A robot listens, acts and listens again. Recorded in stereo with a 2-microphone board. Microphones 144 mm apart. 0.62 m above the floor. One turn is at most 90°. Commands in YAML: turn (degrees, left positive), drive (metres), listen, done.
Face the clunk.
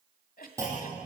turn: -20
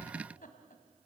listen: true
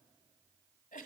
done: "I heard a clunk, but can't make it out now. It was about straight ahead or 140° right."